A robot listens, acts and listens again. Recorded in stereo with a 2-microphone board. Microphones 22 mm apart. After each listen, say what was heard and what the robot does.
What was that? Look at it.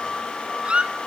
The squeak: about 50° right or 130° right. Turn 50° right.
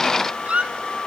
So it is at 80° right. Turn 80° right.
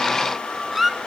The squeak is now 10° right. Turn 10° right.
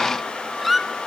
Found it: a squeak, straight ahead.